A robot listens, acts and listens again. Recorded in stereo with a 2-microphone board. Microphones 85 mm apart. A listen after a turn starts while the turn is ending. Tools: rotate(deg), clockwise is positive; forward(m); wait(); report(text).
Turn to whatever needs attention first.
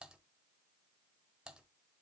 wait()
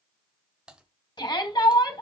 rotate(-60)
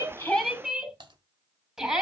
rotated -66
rotate(10)
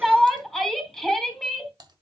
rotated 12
report("Found it: a shout, straight ahead.")